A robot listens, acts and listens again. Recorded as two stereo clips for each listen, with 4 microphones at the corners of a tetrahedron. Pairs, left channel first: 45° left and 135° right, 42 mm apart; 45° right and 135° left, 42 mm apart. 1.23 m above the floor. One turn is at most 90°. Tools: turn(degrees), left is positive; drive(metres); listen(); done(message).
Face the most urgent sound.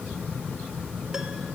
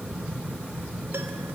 listen()
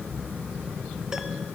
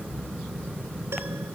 listen()
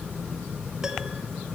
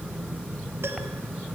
done("I can't make out anything urgent.")